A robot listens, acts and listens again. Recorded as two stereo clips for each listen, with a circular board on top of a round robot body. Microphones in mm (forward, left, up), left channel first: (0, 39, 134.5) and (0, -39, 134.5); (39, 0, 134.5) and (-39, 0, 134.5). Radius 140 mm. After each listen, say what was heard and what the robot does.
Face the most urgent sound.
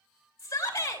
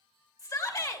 The shout: 40° left. Turn 40° left.
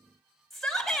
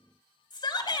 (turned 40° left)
Found it: a shout, straight ahead, 2 to 4 m away.